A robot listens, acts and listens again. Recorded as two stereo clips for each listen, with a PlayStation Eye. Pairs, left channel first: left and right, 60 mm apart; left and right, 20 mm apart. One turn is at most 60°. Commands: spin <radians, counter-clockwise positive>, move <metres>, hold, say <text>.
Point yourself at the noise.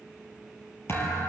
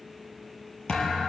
spin 0.79
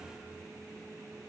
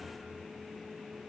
hold
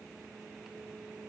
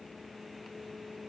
say I heard a thud, but can't make it out now. It was about straight ahead or 90° left.